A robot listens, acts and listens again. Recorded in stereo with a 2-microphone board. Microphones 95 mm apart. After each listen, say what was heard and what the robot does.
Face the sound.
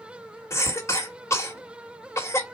The cough: about 30° left or 150° left. Turn 30° left.
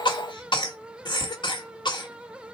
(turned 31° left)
So it is at 115° left. Turn 115° left.
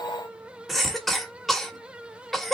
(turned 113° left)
Facing the cough.